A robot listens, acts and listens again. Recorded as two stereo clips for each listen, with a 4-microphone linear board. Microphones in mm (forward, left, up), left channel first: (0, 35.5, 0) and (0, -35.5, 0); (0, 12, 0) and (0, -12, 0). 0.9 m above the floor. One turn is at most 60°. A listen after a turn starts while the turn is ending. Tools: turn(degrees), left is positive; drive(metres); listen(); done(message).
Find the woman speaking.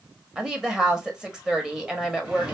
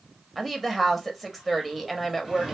turn(degrees=-30)
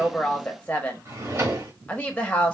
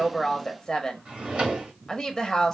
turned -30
turn(degrees=20)
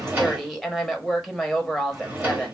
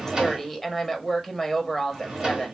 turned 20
done("Found it: a woman speaking, straight ahead, under 1 m away.")